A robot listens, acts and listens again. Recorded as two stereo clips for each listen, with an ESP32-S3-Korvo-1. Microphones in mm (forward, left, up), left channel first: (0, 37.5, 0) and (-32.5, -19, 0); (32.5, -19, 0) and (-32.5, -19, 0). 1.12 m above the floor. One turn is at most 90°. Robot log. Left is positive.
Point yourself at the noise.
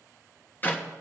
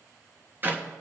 note: The clap: 120° left.
cmd yaw +90
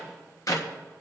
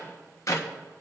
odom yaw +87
note: The clap is now 35° left.
cmd yaw +35
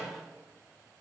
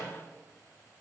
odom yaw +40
cmd idle
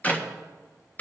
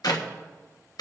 end: Facing the clap, 1 to 2 m away.